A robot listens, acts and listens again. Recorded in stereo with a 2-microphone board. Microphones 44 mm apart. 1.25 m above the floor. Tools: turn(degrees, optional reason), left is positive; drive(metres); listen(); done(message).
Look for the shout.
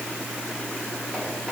listen()
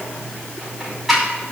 listen()
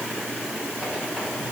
done("I can't make out a shout to turn to.")